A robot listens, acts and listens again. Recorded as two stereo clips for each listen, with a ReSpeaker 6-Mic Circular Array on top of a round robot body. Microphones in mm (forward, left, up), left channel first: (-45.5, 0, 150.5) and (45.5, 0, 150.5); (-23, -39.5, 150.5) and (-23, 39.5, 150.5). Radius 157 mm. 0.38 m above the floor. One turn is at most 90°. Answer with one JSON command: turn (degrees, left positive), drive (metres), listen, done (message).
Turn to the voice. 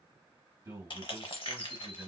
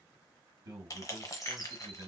{"turn": 65}
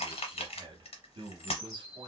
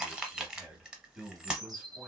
{"turn": 15}
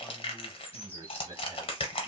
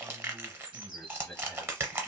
{"done": "Found it: a man speaking, straight ahead."}